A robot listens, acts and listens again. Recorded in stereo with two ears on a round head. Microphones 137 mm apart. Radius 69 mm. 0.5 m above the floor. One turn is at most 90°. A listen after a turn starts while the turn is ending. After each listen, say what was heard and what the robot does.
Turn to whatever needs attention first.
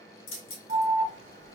The alarm: about 50° right or 130° right. Turn 50° right.
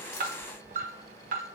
So it is at 65° right. Turn 65° right.
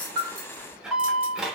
Found it: an alarm, straight ahead.